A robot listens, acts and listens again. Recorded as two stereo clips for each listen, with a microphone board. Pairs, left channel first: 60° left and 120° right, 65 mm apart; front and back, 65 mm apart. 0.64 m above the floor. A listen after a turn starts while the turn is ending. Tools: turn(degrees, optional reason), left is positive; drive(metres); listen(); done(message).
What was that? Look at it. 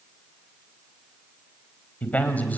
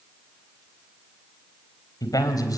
done("Facing the man speaking.")